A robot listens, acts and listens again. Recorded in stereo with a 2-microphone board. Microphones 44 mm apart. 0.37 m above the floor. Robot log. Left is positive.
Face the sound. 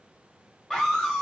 cmd yaw +30
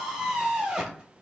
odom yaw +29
note: So it is at 15° right.
cmd yaw -15
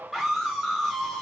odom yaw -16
end: Found it: a scream, straight ahead.